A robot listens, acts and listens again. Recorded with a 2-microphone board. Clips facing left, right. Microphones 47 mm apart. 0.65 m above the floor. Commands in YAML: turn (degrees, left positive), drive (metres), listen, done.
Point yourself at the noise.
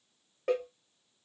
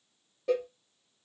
turn: 60
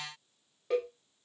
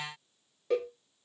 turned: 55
turn: 10
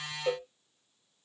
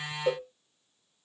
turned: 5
done: "Found it: a cowbell, straight ahead."